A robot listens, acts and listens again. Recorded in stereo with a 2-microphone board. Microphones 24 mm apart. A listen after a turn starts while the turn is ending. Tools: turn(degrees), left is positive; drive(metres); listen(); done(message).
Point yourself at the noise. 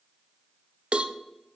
turn(degrees=-55)
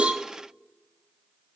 listen()
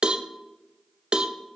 turn(degrees=-45)
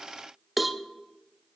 done("Facing the cowbell, under 1 m away.")